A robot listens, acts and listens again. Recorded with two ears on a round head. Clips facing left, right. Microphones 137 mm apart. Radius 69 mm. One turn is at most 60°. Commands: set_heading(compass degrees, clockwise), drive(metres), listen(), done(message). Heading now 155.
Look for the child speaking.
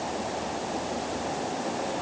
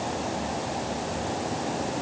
listen()
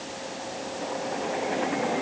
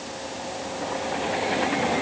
listen()
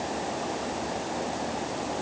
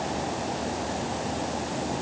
done("I can't make out a child speaking to turn to.")